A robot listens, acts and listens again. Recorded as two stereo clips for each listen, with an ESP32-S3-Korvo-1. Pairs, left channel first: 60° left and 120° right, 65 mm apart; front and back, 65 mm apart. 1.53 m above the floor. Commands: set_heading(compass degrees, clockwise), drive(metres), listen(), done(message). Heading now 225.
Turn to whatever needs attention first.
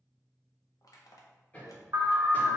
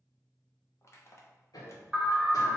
set_heading(325)
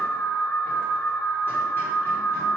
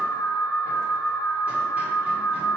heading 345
set_heading(325)
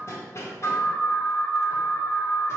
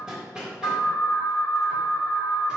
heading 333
done("Found it: an alarm, straight ahead, under 1 m away.")